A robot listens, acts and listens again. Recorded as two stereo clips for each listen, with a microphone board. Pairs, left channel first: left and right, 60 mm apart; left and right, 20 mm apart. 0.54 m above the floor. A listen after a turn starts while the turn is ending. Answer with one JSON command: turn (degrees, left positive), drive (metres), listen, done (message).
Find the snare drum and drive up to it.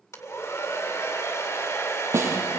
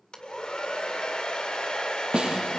{"turn": -45}
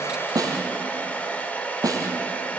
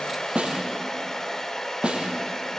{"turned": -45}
{"turn": -90}
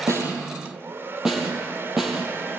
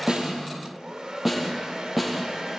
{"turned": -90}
{"turn": -10}
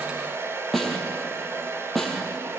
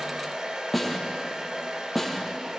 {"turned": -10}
{"drive": 1.0}
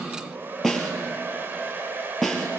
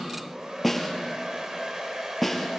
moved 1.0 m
{"drive": 1.0}
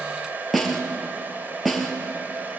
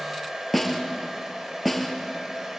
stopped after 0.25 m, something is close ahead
{"done": "Blocked. The snare drum is further on, straight ahead."}